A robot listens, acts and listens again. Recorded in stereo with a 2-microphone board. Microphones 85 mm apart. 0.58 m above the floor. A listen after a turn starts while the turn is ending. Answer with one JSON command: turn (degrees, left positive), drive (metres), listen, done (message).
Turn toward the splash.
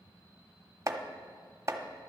{"listen": true}
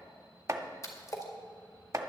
{"turn": 40}
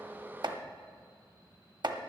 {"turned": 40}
{"listen": true}
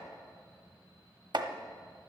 {"done": "I heard a splash, but can't make it out now. It was about straight ahead or 100° left."}